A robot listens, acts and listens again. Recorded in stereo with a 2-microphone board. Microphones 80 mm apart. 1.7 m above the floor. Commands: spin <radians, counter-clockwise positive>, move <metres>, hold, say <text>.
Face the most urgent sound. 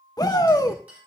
spin 0.96
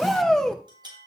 spin 0.17
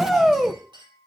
say Found it: a shout, straight ahead, 1 to 2 m away.